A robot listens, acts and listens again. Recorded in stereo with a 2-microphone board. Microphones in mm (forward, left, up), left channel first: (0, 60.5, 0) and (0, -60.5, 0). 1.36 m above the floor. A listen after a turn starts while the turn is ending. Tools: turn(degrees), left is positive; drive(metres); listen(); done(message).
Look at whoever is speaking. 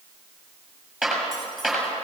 listen()
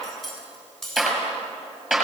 listen()
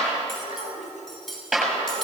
turn(degrees=-90)
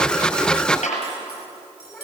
done("Facing the child speaking, over 4 m away.")